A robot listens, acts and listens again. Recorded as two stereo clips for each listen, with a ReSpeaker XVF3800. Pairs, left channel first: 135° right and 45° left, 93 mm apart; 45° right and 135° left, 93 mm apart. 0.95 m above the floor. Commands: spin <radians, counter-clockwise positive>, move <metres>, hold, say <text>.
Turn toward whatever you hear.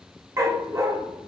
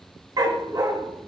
spin 1.75
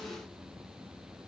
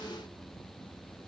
hold
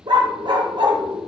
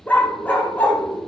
spin 0.44
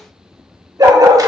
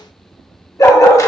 say Found it: a dog barking, straight ahead.